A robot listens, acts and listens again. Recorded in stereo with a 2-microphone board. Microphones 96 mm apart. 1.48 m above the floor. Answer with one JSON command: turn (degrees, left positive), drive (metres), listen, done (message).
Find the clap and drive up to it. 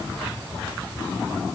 {"listen": true}
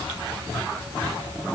{"listen": true}
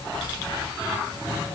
{"done": "I can't make out a clap to turn to."}